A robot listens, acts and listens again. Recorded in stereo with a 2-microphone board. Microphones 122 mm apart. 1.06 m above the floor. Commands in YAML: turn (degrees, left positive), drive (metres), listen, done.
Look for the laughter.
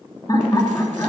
turn: 30
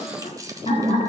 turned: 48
turn: 115
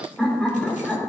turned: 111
done: "Facing the laughter, 2 to 4 m away."